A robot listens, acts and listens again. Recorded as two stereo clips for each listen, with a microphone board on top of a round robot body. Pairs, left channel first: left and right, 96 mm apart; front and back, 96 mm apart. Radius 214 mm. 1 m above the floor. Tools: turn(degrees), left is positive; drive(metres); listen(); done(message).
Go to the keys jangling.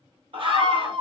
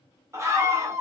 listen()
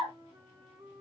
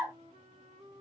listen()
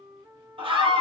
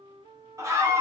done("I can't make out keys jangling, only a flute and a scream.")